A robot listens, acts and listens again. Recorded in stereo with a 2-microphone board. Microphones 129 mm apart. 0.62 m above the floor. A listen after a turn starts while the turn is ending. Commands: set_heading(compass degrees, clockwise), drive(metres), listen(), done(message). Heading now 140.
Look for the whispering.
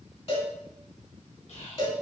set_heading(75)
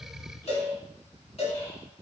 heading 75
listen()
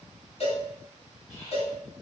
set_heading(50)
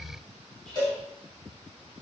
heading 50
done("Found it: whispering, straight ahead.")